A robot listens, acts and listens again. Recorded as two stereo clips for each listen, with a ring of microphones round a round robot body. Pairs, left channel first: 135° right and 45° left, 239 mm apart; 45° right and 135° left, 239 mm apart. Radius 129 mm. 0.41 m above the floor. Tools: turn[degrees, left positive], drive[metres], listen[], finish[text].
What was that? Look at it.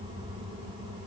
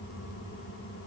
Action: listen[]
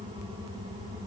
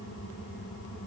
Action: listen[]
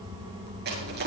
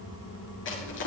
Action: finish[Found it: crushing, straight ahead.]